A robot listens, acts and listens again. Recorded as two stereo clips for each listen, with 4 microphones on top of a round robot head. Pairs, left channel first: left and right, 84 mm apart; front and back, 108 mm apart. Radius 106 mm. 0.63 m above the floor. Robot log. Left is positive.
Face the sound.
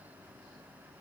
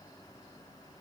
cmd idle
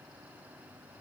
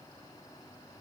cmd idle
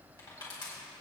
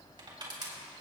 note: The crushing: 130° left.
cmd yaw +130
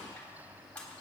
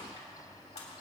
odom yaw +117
note: The crushing is now 15° left.
cmd yaw +15
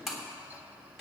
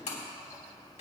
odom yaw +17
end: Found it: crushing, straight ahead, 2 to 4 m away.